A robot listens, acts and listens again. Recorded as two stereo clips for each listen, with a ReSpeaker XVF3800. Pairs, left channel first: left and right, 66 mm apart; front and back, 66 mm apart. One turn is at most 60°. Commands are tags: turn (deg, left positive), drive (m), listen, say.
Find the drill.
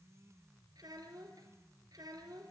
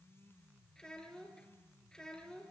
<listen/>
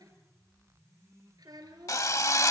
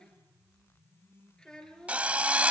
<turn deg="60"/>
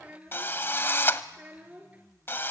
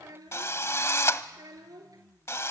<turn deg="40"/>
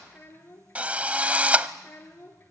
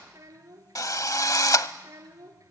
<turn deg="-20"/>
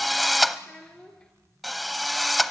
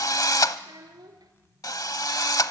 <say>Facing the drill.</say>